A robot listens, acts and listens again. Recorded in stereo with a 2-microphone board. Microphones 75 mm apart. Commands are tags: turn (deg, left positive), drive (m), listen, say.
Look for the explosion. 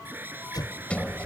<turn deg="65"/>
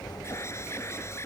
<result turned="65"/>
<listen/>
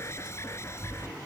<say>I heard an explosion, but can't make it out now. It was about straight ahead or 50° left.</say>